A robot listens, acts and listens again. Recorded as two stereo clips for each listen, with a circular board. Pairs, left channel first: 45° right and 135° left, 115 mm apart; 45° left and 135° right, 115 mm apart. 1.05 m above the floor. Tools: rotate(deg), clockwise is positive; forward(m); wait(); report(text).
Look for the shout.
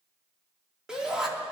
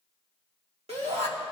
rotate(140)
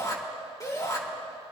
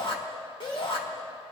rotate(-10)
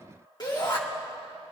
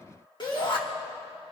report("Facing the shout, 2 to 4 m away.")